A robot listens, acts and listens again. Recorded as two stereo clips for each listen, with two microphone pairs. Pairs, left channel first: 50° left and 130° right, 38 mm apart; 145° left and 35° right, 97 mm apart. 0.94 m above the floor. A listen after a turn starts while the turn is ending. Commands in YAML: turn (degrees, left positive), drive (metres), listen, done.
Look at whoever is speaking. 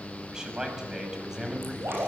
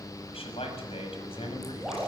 turn: 155
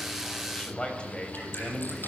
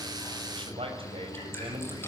turn: -20
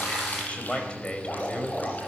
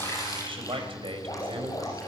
turn: -10
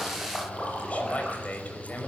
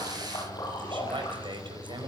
done: "Found it: a man speaking, straight ahead, over 4 m away."